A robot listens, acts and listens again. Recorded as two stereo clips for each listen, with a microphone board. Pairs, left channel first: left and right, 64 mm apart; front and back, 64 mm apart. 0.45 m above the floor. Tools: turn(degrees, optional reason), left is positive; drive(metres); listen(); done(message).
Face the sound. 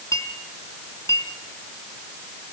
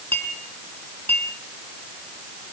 turn(degrees=60, reason="The clink: 60° left.")
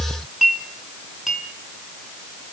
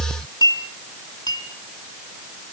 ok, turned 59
done("Facing the clink.")